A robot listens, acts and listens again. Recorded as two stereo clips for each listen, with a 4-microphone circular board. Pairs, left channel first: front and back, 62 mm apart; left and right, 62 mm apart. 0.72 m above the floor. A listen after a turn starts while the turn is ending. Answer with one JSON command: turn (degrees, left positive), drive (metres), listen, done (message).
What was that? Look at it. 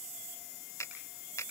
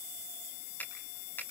{"turn": 35}
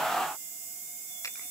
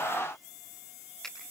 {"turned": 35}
{"listen": true}
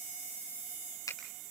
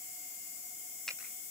{"turn": 10}
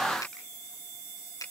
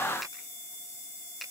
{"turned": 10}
{"done": "Found it: a finger snap, straight ahead."}